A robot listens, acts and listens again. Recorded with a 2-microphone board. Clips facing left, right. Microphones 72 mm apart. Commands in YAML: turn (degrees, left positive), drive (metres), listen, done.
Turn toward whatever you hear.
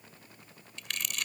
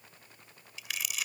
turn: -30
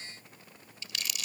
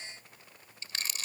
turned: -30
turn: -145
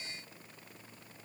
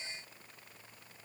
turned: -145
listen: true
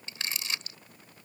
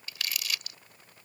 turn: 30
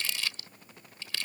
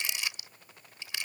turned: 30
turn: -20
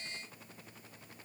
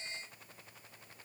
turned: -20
listen: true
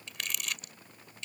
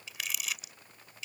done: "Found it: crumpling, straight ahead."